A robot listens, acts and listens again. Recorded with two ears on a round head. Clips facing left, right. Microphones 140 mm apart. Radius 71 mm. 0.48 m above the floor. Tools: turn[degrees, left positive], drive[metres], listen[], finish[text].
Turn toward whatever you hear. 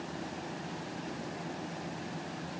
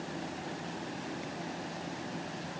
Action: listen[]
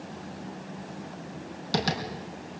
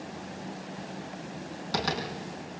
Thought: The tapping: about 30° left or 150° left.
Action: turn[30]
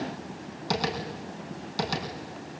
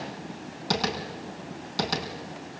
Action: finish[Found it: tapping, straight ahead, over 4 m away.]